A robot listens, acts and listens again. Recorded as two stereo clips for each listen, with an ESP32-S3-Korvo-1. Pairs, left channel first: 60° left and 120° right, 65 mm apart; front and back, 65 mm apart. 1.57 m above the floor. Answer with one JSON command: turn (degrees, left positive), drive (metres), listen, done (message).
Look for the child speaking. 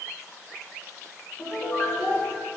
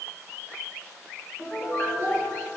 {"turn": 35}
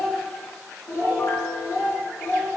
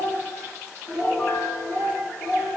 {"turn": 65}
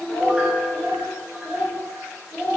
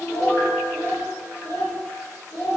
{"done": "Facing the child speaking."}